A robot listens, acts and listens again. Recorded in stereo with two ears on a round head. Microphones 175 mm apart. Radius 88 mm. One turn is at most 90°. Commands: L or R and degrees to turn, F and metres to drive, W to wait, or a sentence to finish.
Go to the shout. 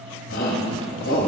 L75
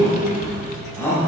L15
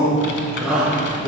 F1.0
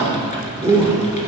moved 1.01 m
R15
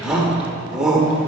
F1.0
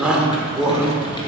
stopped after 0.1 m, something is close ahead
Arrived at the shout, straight ahead.